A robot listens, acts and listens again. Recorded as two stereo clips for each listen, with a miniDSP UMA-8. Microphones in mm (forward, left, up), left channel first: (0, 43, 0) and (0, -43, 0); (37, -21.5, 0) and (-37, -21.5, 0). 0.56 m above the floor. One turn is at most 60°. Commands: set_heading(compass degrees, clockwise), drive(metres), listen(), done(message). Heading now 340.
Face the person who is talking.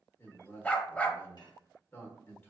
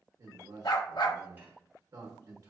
set_heading(280)
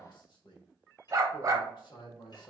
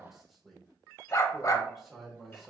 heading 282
set_heading(222)
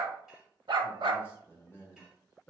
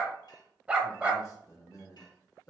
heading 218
set_heading(188)
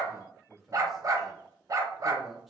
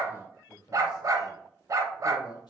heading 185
done("Found it: a man speaking, straight ahead, 1 to 2 m away.")